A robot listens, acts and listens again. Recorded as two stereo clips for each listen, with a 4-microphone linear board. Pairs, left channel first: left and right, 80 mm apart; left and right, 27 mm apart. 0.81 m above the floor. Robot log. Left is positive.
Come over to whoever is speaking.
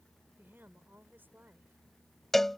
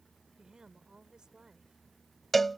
note: The woman speaking: about 25° right or 155° right.
cmd yaw -25
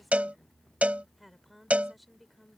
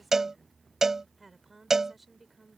cmd fwd 1.0
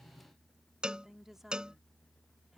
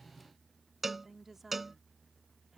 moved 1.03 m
cmd fwd 1.0
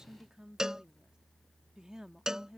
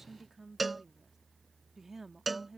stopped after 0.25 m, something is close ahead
note: The woman speaking is now 10° right.
cmd yaw -10
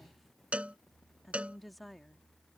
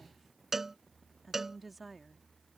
end: I am next to the woman speaking.